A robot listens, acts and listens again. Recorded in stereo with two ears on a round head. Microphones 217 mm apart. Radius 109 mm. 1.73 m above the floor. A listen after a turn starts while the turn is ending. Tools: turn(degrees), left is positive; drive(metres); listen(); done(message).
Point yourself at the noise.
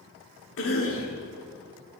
turn(degrees=60)
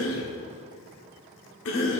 turn(degrees=60)
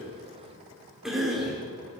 done("Facing the cough, 1 to 2 m away.")